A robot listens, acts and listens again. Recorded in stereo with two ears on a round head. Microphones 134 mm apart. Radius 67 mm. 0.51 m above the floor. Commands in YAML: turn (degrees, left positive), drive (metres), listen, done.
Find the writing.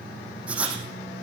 turn: -30
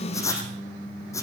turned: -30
turn: 20
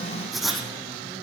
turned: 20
done: "Found it: writing, straight ahead, over 4 m away."